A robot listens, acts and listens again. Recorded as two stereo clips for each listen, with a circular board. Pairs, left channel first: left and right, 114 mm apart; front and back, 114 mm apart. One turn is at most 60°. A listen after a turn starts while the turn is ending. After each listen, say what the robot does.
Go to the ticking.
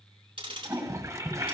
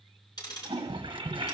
Turn 50° right.
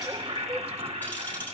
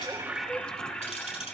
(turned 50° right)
Turn 15° left.
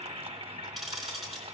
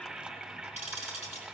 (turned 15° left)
Drive 1.0 m forward.
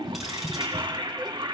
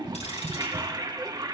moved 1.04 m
Keep listening.
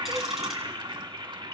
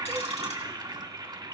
Keep listening.
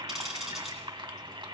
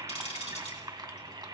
Drive 1.0 m forward.
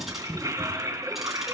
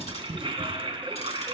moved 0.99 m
Keep listening.
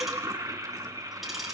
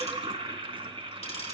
Drive 1.0 m forward.
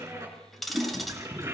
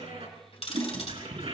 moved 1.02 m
Drive 1.0 m forward.
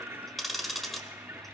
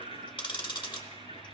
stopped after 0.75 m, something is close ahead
Arrived at the ticking, straight ahead.